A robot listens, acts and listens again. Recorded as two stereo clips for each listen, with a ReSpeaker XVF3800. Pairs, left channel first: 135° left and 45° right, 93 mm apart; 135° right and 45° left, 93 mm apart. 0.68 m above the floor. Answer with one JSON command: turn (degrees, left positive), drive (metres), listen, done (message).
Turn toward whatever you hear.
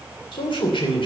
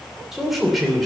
{"turn": 135}
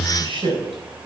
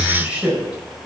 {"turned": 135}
{"turn": -35}
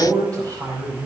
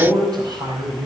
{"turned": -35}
{"done": "Facing the man speaking."}